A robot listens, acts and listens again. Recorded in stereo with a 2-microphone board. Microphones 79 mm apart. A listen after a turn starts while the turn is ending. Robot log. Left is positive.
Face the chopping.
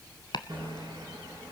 note: The chopping: about 70° left or 110° left.
cmd yaw +70
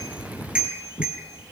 note: So it is at 35° left.
cmd yaw +35
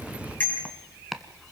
end: Found it: chopping, straight ahead.